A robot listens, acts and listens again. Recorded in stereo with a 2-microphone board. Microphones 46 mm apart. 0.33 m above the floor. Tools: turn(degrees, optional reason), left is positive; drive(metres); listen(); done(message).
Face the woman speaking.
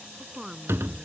turn(degrees=-30)
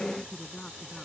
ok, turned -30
turn(degrees=15, reason="So it is at 15° left.")
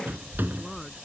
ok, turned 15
listen()
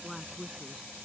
done("Found it: a woman speaking, straight ahead.")